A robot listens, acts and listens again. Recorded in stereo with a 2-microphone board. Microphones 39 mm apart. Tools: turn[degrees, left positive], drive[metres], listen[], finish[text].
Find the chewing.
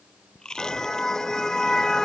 Thought: The chewing: about 15° left or 165° left.
Action: turn[15]
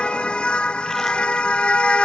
Action: listen[]
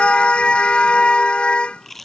Action: finish[Facing the chewing.]